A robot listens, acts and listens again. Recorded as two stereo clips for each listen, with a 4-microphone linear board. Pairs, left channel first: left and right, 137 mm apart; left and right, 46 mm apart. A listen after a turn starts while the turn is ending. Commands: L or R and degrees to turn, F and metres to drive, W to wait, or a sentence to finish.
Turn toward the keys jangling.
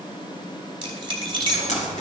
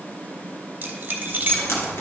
R40
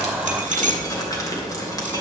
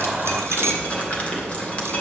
R100
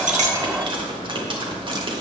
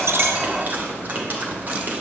W
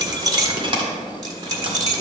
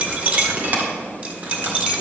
R30
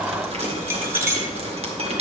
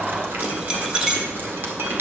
R20
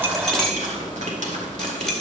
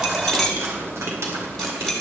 Found it: keys jangling, straight ahead.